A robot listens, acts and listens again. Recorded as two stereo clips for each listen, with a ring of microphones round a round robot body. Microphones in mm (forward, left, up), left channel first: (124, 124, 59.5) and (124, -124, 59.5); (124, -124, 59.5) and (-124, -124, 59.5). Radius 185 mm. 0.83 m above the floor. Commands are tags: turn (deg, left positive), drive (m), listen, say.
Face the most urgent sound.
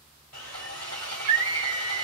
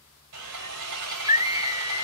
<turn deg="-105"/>
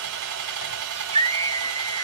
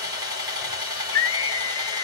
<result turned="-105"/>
<turn deg="-25"/>
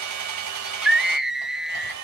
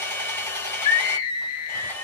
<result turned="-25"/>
<say>Found it: a scream, straight ahead, 1 to 2 m away.</say>